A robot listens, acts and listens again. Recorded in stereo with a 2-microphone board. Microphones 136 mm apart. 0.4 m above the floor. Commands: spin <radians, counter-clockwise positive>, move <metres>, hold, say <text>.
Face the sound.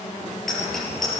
spin 0.52
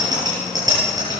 spin -0.52
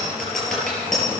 say Facing the bicycle bell.